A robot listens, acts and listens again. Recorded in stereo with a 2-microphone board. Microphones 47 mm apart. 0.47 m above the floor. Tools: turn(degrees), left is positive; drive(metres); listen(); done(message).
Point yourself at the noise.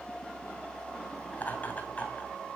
turn(degrees=30)
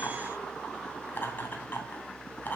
turn(degrees=40)
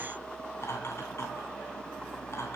turn(degrees=115)
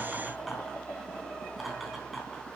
done("Facing the laughter.")